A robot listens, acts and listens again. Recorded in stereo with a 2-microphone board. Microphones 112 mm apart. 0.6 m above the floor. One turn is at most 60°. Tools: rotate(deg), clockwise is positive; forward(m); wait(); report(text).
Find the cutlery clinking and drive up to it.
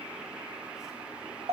wait()
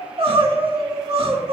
wait()
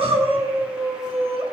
report("I can't make out cutlery clinking, only crying.")